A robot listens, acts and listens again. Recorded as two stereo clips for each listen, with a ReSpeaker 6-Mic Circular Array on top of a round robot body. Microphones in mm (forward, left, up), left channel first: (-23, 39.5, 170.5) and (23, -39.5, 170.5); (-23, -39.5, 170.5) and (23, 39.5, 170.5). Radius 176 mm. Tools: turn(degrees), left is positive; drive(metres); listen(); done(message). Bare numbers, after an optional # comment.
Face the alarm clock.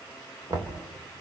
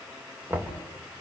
listen()
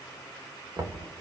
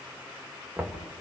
listen()
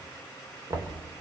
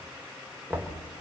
done("I can't make out an alarm clock, only knocking.")